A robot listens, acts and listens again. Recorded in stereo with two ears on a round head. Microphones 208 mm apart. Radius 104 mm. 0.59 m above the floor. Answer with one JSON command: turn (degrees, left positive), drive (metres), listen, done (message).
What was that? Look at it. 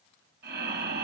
{"turn": -45}
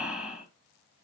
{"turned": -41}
{"done": "Facing the breathing, 2 to 4 m away."}